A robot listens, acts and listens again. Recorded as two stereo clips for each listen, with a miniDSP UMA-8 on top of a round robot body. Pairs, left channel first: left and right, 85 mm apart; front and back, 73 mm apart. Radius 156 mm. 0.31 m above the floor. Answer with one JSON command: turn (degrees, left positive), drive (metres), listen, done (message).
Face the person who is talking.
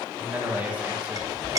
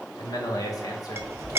{"turn": -20}
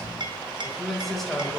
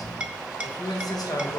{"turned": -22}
{"done": "Facing the man speaking, 2 to 4 m away."}